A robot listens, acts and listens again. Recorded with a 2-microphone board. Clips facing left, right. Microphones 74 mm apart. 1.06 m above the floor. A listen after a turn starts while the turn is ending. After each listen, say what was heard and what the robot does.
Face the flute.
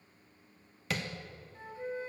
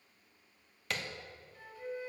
The flute: about 30° left or 150° left. Turn 30° left.
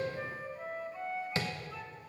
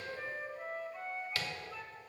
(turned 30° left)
Found it: a flute, straight ahead, 1 to 2 m away.